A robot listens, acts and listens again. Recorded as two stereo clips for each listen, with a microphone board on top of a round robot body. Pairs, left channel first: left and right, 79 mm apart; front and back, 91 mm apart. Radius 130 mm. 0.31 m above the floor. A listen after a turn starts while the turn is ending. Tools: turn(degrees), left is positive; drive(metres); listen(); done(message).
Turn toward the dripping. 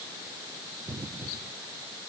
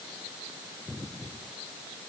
listen()
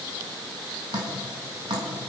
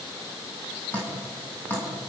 turn(degrees=-70)
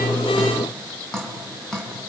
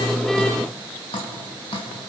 done("Found it: dripping, straight ahead, over 4 m away.")